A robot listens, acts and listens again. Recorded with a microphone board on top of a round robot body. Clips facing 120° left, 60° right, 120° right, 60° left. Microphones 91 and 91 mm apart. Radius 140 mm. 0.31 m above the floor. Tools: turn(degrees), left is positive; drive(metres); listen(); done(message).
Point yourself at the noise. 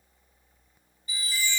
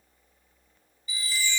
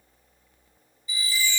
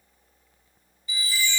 turn(degrees=80)
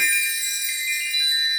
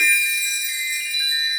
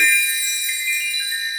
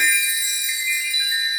turn(degrees=-10)
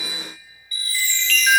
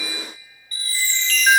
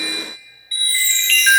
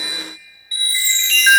done("Found it: a chime, straight ahead, 2 to 4 m away.")